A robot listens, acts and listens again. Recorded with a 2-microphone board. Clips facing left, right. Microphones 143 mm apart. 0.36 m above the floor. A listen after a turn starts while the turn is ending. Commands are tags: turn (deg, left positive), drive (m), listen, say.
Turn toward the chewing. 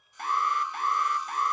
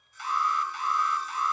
<listen/>
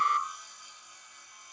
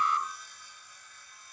<listen/>
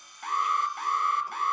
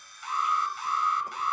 <say>I can't make out chewing to turn to.</say>